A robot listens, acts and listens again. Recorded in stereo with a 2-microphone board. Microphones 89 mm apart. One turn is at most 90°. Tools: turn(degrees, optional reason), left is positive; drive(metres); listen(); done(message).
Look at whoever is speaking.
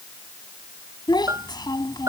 turn(degrees=55, reason="The child speaking: about 55° left or 125° left.")
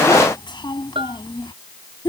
turn(degrees=70, reason="So it is at 70° left.")
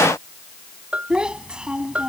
turn(degrees=-10, reason="The child speaking is now 10° right.")
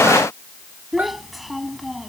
done("Found it: a child speaking, straight ahead.")